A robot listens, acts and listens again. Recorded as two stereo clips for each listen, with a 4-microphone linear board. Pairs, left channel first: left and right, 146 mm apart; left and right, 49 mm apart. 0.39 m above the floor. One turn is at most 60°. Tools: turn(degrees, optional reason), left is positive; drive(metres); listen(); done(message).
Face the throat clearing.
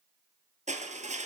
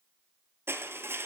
listen()
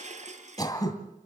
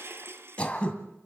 turn(degrees=25, reason="The throat clearing: about 25° left or 155° left.")
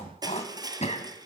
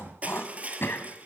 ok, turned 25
turn(degrees=60, reason="So it is at 125° left.")
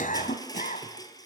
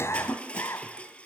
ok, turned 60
turn(degrees=60, reason="The throat clearing is now 75° left.")
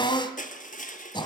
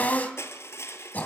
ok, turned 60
turn(degrees=35, reason="The throat clearing is now 35° left.")
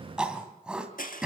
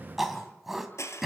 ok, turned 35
done("Found it: throat clearing, straight ahead, 2 to 4 m away.")